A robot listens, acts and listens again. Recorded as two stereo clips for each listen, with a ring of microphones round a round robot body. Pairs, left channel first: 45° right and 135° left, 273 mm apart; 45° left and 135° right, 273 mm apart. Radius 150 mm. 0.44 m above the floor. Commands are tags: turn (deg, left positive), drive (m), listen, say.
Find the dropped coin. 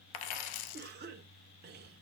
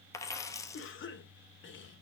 <turn deg="-35"/>
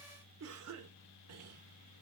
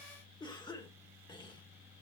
<say>Facing where the dropped coin came from. I can't hear it now.</say>